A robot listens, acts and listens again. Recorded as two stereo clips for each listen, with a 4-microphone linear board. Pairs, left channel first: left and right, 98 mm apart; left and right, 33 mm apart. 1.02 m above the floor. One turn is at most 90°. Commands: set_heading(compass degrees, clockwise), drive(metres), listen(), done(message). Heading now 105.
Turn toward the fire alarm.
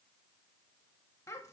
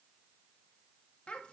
listen()
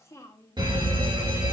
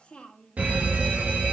set_heading(155)
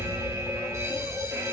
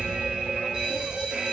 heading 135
set_heading(170)
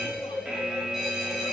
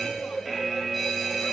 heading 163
set_heading(173)
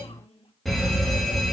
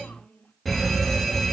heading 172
done("Found it: a fire alarm, straight ahead, 2 to 4 m away.")